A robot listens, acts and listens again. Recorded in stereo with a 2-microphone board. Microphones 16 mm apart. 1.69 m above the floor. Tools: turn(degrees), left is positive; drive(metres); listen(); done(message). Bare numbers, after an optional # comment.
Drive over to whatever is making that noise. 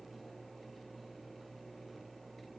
listen()
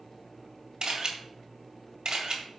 # The camera shutter: about 50° right or 130° right.
turn(-50)
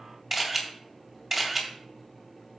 # So it is at 10° right.
turn(-10)
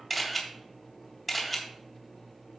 drive(1.0)
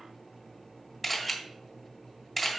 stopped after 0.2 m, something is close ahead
done("Blocked. The camera shutter is further on, straight ahead.")